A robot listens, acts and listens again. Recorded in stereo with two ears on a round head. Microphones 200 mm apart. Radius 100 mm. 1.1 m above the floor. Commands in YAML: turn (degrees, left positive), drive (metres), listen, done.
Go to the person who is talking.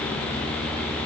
listen: true
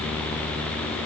listen: true
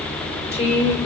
turn: 30
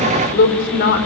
turn: 120
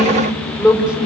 drive: 1.0
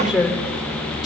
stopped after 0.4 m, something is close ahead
done: "Blocked. The woman speaking is further on, straight ahead."